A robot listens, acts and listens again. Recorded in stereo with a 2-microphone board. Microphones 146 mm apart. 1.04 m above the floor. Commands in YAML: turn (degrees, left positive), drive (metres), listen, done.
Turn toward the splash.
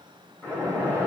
turn: 30
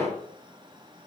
turn: 135
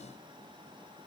done: "Facing where the splash came from. I can't hear it now."